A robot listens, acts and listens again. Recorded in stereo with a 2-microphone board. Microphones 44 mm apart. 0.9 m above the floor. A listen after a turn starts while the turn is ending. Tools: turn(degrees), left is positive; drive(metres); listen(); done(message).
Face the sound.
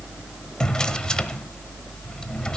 turn(degrees=20)
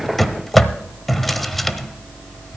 done("Facing the drawer, 1 to 2 m away.")